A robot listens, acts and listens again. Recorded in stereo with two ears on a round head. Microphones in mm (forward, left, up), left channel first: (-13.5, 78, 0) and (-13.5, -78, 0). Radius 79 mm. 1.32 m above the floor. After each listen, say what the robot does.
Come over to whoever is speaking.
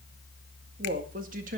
Turn 50° right.
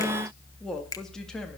Drive 1.0 m forward.
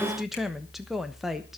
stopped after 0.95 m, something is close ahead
I am next to the woman speaking.